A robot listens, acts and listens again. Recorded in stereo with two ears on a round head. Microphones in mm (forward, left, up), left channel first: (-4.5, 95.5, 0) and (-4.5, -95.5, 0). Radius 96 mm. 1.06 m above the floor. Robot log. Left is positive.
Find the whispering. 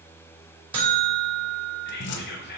note: The whispering: about 50° left or 130° left.
cmd yaw +50
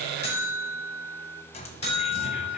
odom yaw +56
cmd idle
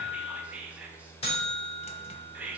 end: Facing the whispering.